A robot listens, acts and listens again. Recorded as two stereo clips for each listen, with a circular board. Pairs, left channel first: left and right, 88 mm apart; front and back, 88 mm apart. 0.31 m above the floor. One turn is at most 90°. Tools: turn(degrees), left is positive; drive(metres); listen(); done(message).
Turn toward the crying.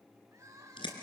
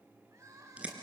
turn(degrees=-90)
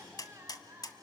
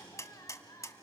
turn(degrees=-35)
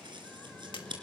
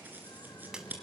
listen()
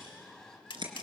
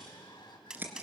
listen()
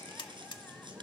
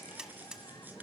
done("I heard crying from this way, but can't make it out now.")